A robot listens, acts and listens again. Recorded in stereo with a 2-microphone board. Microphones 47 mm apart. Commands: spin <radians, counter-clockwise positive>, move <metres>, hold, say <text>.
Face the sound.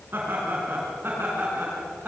spin -0.79
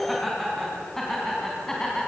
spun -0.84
spin 0.17
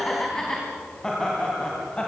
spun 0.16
spin 0.35
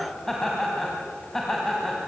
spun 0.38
spin 0.17
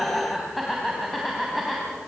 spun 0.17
say Found it: laughter, straight ahead, 2 to 4 m away.